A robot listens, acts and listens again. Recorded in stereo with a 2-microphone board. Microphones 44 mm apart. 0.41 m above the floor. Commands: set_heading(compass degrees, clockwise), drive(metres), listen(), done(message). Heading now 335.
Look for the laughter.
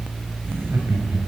set_heading(35)
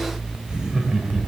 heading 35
set_heading(50)
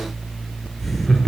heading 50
done("Found it: laughter, straight ahead.")